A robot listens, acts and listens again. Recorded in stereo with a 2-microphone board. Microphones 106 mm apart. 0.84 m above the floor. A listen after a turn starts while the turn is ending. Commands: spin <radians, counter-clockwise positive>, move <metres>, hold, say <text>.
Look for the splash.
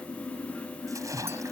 spin -0.52
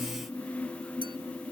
hold
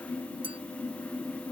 say I heard a splash, but can't make it out now. It was about straight ahead or 120° right.